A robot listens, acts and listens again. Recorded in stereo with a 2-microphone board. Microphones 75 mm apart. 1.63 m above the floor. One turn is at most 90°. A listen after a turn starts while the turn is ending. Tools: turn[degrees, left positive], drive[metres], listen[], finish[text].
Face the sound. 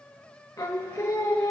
Thought: The singing: about 45° left or 135° left.
Action: turn[45]
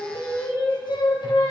Thought: So it is at 85° left.
Action: turn[85]
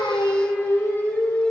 Thought: The singing is now 35° left.
Action: turn[35]
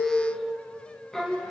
Action: finish[Facing the singing, 1 to 2 m away.]